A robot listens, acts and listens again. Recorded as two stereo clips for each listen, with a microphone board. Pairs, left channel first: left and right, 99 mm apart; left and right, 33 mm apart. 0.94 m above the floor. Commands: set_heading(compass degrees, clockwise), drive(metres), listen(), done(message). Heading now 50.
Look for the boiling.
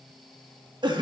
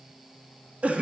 listen()
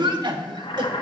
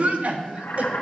set_heading(340)
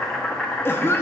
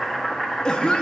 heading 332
set_heading(322)
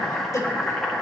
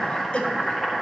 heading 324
done("Facing the boiling, 1 to 2 m away.")